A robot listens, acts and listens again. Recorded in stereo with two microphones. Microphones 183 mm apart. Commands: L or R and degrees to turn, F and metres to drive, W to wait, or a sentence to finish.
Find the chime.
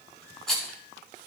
W
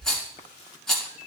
W
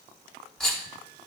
I can't make out a chime, only a rattle.